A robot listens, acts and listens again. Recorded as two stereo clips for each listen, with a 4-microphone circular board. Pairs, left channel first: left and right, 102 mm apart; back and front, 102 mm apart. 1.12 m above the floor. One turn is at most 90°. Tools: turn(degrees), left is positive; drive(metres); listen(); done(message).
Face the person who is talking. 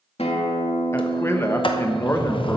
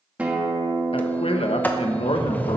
turn(degrees=90)
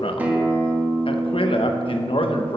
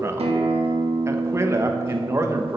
turn(degrees=60)
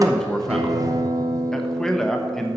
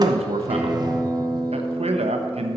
done("Facing the man speaking.")